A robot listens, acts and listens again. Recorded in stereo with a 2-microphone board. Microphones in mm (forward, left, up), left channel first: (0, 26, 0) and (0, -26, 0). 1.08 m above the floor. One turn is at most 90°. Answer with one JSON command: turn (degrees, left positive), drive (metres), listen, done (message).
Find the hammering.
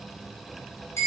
{"listen": true}
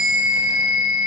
{"listen": true}
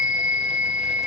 {"done": "I can't make out hammering to turn to."}